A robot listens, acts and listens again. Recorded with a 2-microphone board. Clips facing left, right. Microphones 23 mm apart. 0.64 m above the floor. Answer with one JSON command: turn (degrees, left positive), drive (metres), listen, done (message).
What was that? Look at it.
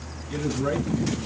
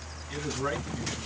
{"turn": -30}
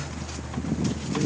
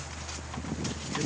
{"listen": true}
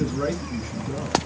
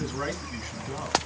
{"turn": -145}
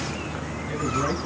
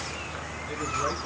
{"listen": true}
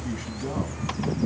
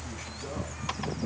{"listen": true}
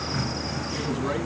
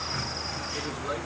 {"turn": 45}
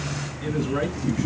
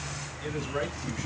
{"done": "Facing the man speaking."}